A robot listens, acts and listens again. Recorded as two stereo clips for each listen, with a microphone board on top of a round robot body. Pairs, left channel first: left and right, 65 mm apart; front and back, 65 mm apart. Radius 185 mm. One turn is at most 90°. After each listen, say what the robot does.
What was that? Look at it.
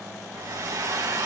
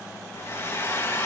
Turn 50° right.
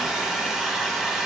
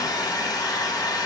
Found it: a hair dryer, straight ahead.